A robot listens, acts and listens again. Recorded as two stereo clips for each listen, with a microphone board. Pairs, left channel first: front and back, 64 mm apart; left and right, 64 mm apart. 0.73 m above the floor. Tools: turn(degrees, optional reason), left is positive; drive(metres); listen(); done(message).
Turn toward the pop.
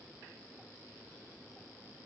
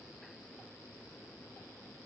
listen()
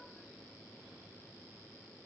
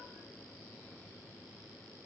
listen()
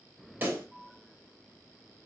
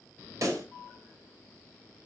turn(degrees=-120, reason="The pop: 120° right.")
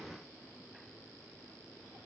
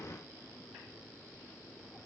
done("Facing where the pop came from. I can't hear it now.")